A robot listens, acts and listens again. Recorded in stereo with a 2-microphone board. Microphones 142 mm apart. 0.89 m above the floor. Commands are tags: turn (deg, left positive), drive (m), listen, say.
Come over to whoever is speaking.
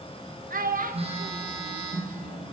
<turn deg="-90"/>
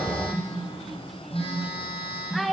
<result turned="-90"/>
<drive m="1.0"/>
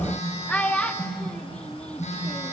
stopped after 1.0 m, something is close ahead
<turn deg="10"/>
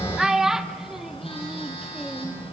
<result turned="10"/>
<say>Arrived at the child speaking, straight ahead.</say>